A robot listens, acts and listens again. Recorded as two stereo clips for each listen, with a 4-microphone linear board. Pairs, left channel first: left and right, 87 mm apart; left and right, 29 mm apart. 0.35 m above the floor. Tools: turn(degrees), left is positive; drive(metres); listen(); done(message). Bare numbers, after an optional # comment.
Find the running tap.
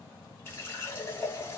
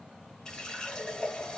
# The running tap: about 25° left or 155° left.
turn(25)
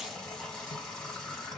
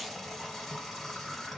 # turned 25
done("Facing the running tap.")